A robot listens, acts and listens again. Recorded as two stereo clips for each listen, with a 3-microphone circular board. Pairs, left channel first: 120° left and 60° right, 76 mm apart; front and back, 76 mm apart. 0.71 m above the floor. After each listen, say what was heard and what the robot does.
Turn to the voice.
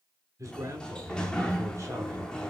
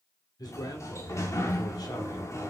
The man speaking: 20° right. Turn 20° right.
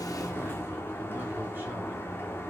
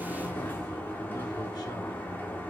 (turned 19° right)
Keep listening.
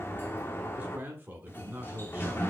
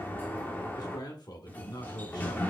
Facing the man speaking, 2 to 4 m away.